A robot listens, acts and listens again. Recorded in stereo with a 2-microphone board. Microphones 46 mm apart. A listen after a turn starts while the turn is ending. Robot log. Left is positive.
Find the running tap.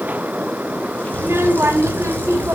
cmd idle
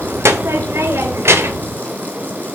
cmd idle
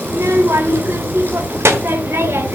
end: I can't make out a running tap to turn to.